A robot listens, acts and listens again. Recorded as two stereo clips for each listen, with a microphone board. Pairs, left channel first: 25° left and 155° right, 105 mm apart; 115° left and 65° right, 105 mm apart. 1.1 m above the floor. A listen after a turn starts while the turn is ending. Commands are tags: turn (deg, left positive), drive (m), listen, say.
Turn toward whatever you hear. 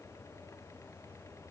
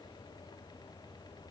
<listen/>
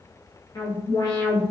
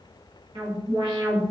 <turn deg="-30"/>
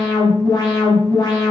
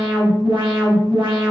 <turn deg="-30"/>
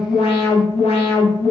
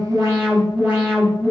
<turn deg="10"/>
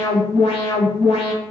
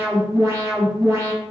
<say>Facing the alarm, under 1 m away.</say>